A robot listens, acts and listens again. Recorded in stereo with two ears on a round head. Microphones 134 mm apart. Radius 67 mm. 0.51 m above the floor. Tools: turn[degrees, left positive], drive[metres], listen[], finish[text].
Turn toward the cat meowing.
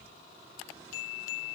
Action: listen[]
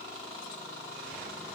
Action: listen[]
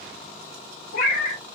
Thought: The cat meowing: about 60° left or 120° left.
Action: turn[60]
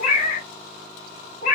Thought: So it is at 55° left.
Action: turn[55]
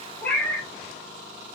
Thought: The cat meowing is now 10° left.
Action: turn[10]
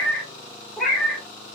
Action: finish[Facing the cat meowing.]